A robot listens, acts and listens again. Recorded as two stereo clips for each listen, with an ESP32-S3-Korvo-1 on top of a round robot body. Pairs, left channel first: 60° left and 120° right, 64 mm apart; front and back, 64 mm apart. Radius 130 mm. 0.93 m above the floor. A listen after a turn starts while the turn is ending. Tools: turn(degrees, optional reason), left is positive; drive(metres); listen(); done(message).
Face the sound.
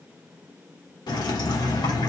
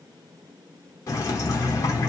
turn(degrees=50, reason="The dripping: 50° left.")
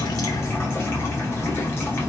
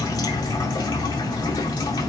done("Facing the dripping.")